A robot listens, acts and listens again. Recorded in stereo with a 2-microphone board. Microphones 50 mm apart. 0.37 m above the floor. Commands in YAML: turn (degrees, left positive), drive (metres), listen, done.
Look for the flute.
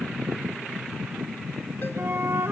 turn: -60
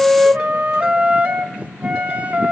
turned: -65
turn: -35
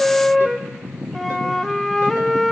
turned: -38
done: "Found it: a flute, straight ahead."